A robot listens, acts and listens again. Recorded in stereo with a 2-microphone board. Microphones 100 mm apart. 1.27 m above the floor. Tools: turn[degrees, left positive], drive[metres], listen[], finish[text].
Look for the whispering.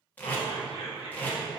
Thought: The whispering: about 75° left or 105° left.
Action: turn[75]
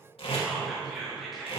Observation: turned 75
Action: finish[Found it: whispering, straight ahead, under 1 m away.]